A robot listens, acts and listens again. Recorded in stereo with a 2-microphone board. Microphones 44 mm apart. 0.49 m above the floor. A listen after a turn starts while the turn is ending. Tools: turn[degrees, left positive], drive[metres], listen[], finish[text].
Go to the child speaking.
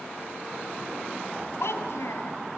Thought: The child speaking: about 75° left or 105° left.
Action: turn[75]
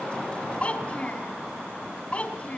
Thought: So it is at 30° left.
Action: turn[30]
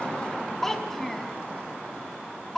Action: drive[1.0]
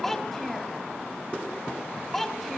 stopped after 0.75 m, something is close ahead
Action: finish[Something is in my way. I am facing the child speaking but have not reached it.]